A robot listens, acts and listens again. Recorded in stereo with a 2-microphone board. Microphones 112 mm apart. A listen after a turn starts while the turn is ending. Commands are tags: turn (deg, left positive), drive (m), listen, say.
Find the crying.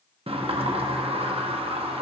<listen/>
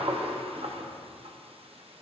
<listen/>
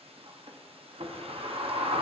<say>I can't make out crying, only a sliding door.</say>